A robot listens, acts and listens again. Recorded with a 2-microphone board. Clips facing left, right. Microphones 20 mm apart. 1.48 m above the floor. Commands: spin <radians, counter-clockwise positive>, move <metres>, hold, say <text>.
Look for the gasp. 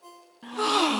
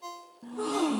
spin 1.57
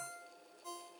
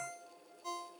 say I heard a gasp from this way, but can't make it out now.